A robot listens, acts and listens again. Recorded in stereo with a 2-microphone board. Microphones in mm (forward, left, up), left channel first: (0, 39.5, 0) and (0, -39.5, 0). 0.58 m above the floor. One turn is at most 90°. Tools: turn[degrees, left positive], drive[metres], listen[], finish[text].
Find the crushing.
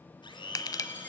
Thought: The crushing: about 50° left or 130° left.
Action: turn[50]
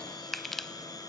Action: finish[Found it: crushing, straight ahead, under 1 m away.]